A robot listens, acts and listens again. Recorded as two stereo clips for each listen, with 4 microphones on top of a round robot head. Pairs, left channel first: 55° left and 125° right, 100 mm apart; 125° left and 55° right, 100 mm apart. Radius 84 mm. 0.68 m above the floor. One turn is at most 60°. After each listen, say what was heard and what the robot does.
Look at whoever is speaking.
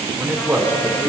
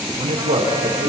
The man speaking: 55° right. Turn 55° right.
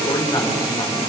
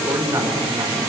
Facing the man speaking.